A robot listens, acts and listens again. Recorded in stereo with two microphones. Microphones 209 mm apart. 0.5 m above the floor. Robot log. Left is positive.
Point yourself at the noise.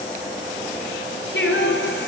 note: The singing: about 60° left or 120° left.
cmd yaw +60
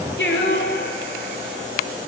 note: So it is at 55° left.
cmd yaw +55
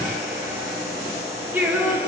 end: Found it: singing, straight ahead, over 4 m away.